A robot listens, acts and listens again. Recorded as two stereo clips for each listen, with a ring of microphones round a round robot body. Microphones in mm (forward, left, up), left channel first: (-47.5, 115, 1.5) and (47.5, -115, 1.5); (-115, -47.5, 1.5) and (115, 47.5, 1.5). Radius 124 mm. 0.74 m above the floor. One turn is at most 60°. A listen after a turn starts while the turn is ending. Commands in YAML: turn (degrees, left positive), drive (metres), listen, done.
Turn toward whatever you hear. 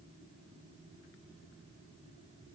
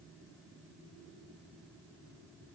listen: true
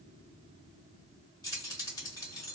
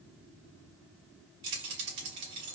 turn: 35
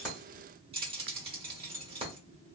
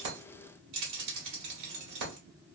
done: "Found it: keys jangling, straight ahead, 1 to 2 m away."